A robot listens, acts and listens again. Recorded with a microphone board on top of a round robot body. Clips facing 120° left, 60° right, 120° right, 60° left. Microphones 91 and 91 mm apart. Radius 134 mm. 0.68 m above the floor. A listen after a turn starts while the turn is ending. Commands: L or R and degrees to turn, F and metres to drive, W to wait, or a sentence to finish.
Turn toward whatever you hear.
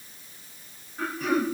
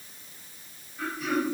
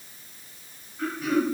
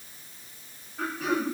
L80
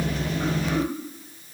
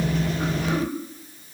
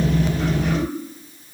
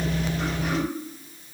W
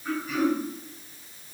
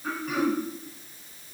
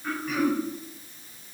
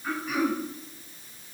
R25
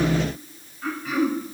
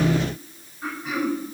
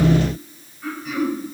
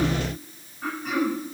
L15
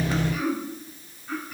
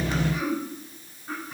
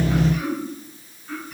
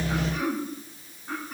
Facing the throat clearing.